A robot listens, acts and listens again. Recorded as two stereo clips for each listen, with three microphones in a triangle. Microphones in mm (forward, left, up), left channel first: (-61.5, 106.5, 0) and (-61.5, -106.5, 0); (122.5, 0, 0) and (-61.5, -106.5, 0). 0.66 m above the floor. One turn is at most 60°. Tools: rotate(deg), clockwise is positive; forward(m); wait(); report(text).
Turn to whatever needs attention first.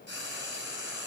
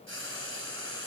wait()
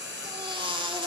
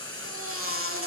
rotate(60)
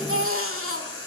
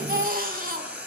rotate(60)
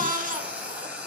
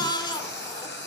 rotate(40)
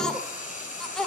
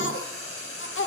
report("Facing the baby crying, 1 to 2 m away.")